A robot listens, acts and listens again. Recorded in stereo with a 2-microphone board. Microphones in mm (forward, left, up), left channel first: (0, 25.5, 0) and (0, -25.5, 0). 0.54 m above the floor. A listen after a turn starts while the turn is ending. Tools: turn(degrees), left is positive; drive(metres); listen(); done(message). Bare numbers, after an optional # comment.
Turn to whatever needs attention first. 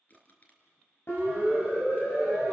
# The siren: about 55° left or 125° left.
turn(55)
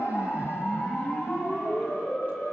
# So it is at 65° left.
turn(65)
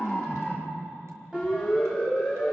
# The siren is now 20° right.
turn(-20)
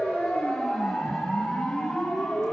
done("Found it: a siren, straight ahead.")